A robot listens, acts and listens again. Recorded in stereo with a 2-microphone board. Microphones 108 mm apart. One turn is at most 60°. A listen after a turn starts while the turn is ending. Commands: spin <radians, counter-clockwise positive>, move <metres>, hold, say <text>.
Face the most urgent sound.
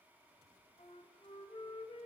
hold
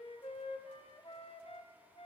hold
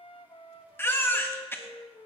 spin 0.35
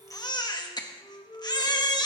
spin 1.05
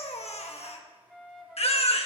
spin 1.05
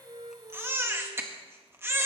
spin -0.35
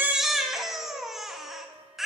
say Facing the baby crying, 1 to 2 m away.